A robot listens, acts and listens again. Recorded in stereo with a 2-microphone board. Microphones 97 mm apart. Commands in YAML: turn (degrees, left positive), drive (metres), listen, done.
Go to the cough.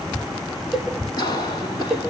turn: 45
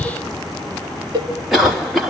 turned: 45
drive: 1.0
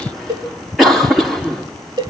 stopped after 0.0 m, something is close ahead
done: "Something is in my way. I am facing the cough but have not reached it."